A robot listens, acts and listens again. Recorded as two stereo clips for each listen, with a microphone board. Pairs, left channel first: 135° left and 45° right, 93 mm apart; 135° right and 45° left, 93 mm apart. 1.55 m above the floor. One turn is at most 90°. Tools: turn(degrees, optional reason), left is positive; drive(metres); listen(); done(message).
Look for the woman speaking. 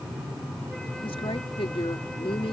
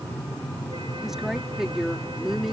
turn(degrees=90, reason="The woman speaking: 130° left.")
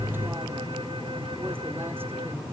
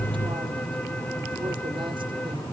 turn(degrees=40, reason="Nothing new. It was at 40° left.")
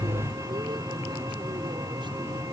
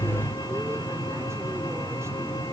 listen()
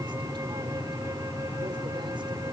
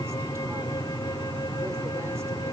done("I heard a woman speaking from this way, but can't make it out now.")